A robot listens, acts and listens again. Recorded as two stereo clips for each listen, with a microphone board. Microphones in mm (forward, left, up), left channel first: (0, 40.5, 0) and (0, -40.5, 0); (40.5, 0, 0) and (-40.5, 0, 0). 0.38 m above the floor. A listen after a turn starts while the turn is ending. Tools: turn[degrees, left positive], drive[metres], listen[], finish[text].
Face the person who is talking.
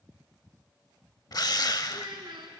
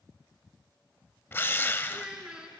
Thought: The child speaking: 100° right.
Action: turn[-100]
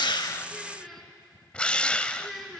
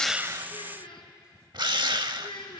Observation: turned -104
Action: finish[Facing the child speaking, 2 to 4 m away.]